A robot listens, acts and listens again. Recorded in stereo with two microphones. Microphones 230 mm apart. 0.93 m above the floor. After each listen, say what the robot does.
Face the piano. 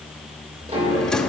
Turn 30° right.
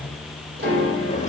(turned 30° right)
Turn 125° right.
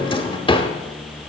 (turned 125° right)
Keep listening.
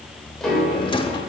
Facing the piano.